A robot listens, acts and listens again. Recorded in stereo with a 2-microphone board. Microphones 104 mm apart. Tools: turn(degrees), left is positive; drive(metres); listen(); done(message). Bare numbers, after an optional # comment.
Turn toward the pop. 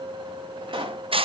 # The pop: about 50° right or 130° right.
turn(-50)
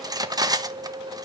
listen()
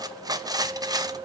done("I heard a pop, but can't make it out now. It was about straight ahead or 80° right.")